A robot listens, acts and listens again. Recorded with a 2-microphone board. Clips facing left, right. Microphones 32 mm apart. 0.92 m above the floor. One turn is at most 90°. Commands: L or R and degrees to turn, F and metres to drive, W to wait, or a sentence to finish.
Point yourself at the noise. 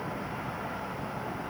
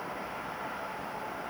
W
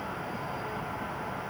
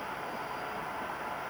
W
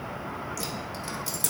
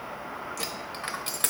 R50
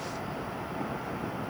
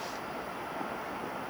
W
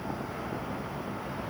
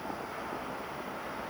I heard a dropped coin, but can't make it out now. It was about straight ahead or 80° right.